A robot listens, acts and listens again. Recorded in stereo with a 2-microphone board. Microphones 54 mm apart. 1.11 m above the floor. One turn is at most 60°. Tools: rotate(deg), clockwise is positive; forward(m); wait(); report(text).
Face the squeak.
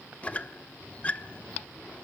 rotate(-25)
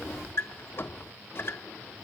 rotate(-60)
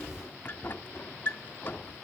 rotate(-50)
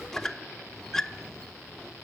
rotate(-10)
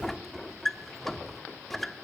report("Facing the squeak.")